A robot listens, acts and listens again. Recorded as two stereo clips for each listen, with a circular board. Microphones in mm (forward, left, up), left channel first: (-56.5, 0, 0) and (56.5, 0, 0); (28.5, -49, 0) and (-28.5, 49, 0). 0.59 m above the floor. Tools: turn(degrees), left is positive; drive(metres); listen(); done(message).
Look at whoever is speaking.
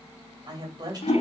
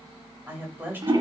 turn(degrees=50)
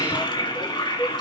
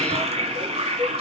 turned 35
turn(degrees=15)
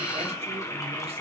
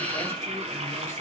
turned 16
listen()
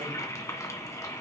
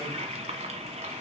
done("Facing where the woman speaking came from. I can't hear it now.")